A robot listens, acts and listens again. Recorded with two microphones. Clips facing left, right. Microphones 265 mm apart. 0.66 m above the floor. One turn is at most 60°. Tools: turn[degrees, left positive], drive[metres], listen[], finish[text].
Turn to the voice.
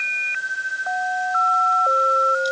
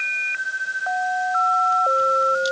Action: listen[]
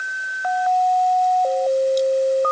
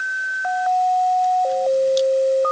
Action: listen[]
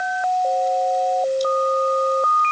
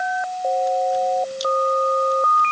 Action: finish[I can't make out anyone speaking to turn to.]